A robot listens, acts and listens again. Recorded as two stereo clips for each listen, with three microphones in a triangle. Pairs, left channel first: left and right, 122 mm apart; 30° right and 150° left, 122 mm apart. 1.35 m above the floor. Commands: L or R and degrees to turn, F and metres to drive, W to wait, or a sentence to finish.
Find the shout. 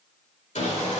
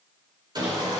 W
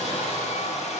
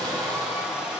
W
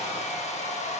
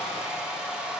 I can't make out a shout to turn to.